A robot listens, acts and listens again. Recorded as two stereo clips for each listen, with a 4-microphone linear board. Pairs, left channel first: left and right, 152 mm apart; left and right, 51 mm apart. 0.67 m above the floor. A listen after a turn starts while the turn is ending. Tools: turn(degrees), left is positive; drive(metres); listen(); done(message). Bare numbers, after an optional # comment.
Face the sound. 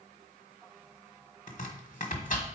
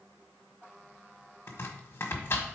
# The chopping: about 55° left or 125° left.
turn(55)
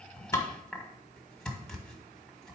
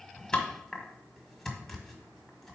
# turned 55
done("Found it: chopping, straight ahead.")